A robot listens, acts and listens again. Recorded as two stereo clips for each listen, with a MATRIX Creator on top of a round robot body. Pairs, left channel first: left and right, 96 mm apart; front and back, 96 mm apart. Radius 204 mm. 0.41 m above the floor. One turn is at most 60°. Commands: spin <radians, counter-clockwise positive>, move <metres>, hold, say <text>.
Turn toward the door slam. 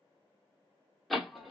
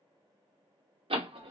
spin 1.05
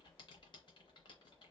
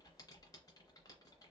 spin 1.05
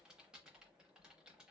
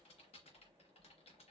spin 1.05
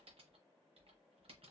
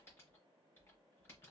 say Facing where the door slam came from. I can't hear it now.